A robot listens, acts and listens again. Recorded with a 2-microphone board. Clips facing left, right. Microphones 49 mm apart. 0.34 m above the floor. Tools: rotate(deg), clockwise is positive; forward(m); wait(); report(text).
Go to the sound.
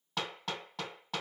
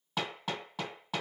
rotate(30)
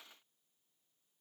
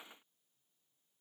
wait()
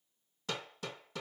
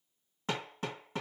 rotate(145)
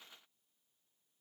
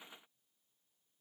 wait()
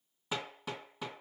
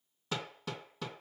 rotate(-10)
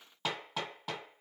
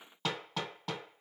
forward(1.0)
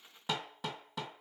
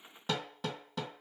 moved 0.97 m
forward(1.0)
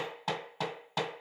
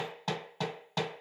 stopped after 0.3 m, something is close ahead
rotate(-10)
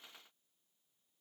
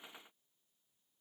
wait()
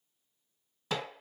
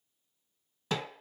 report("Arrived at the hammering, straight ahead.")